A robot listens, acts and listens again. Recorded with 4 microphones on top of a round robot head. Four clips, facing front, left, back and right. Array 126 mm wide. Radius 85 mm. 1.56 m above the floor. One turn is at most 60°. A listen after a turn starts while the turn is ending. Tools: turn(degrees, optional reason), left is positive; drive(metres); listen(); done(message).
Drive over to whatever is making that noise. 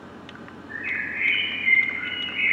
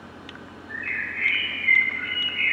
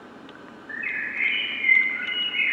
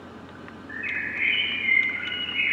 turn(degrees=-60, reason="The bird: 165° right.")
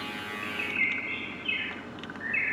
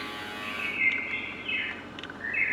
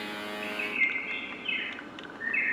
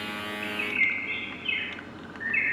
turn(degrees=-60, reason="The bird is now 100° right.")
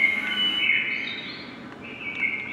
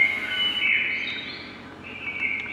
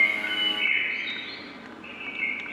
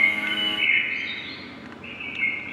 turn(degrees=-45, reason="The bird is now 45° right.")
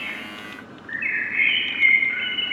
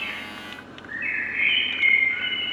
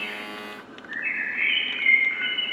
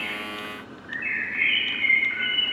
drive(metres=1.0)
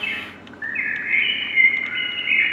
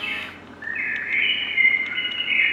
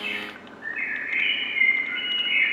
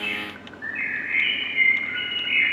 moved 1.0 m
drive(metres=1.0)
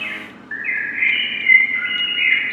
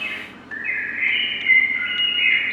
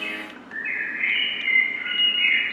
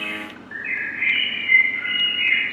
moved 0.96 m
turn(degrees=10, reason="The bird is now 10° left.")
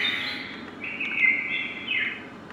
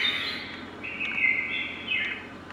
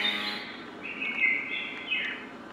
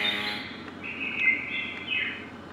drive(metres=1.0)
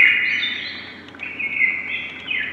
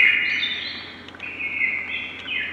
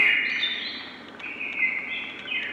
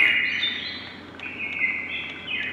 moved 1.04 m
drive(metres=1.0)
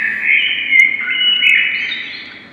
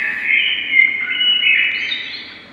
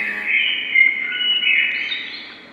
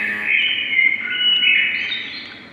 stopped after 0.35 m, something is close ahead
turn(degrees=10, reason="The bird is now 10° left.")
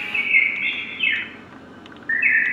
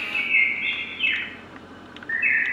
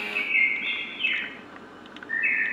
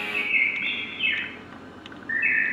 done("I am next to the bird.")